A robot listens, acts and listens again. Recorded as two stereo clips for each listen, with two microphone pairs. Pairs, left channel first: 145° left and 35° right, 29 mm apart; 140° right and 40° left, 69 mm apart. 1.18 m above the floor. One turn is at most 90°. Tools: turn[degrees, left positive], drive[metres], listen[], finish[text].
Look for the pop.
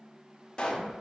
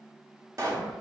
Thought: The pop: 80° left.
Action: turn[80]
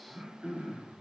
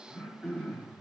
Action: finish[Facing where the pop came from. I can't hear it now.]